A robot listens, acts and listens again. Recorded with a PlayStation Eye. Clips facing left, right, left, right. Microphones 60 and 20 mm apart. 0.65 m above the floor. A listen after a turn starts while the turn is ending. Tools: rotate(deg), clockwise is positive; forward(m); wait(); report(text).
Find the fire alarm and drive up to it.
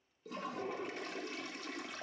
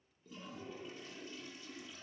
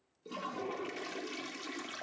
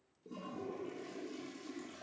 wait()
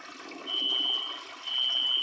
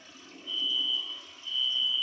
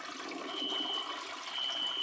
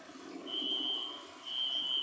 rotate(20)
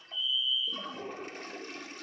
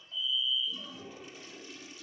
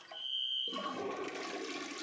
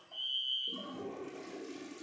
forward(1.0)
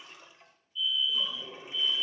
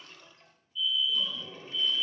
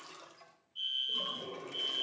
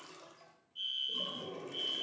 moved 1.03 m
forward(1.0)
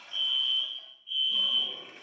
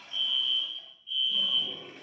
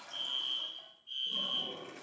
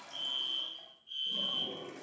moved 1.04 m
forward(1.0)
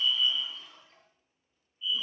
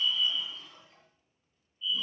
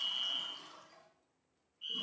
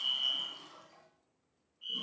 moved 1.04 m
rotate(-15)
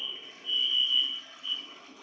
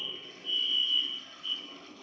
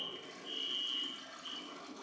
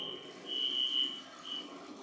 forward(1.0)
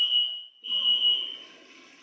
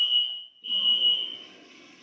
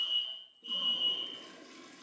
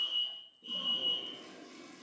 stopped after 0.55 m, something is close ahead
rotate(-10)
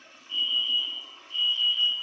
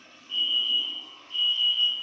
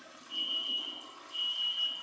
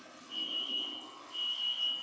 report("Arrived at the fire alarm, straight ahead.")